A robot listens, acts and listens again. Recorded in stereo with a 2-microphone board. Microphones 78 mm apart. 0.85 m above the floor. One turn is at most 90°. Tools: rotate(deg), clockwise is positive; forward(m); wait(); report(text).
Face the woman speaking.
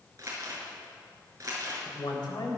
rotate(-70)
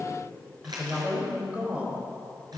rotate(25)
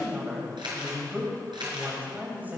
rotate(25)
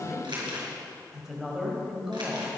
rotate(10)
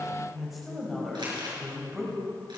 report("Found it: a woman speaking, straight ahead.")